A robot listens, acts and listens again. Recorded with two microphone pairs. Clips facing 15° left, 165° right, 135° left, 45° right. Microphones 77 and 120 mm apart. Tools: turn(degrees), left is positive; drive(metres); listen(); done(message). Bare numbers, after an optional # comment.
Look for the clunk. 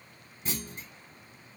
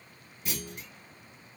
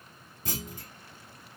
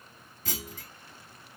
# The clunk: 65° left.
turn(65)
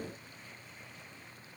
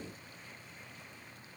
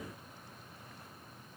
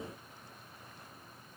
done("Facing where the clunk came from. I can't hear it now.")